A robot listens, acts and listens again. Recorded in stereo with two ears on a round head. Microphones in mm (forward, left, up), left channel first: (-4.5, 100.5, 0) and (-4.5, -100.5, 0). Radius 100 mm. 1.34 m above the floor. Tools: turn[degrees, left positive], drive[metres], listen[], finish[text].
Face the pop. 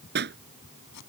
Thought: The pop: about 50° right or 130° right.
Action: turn[-50]
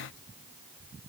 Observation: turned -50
Action: listen[]
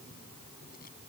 Action: finish[I heard a pop, but can't make it out now. It was about straight ahead or 80° right.]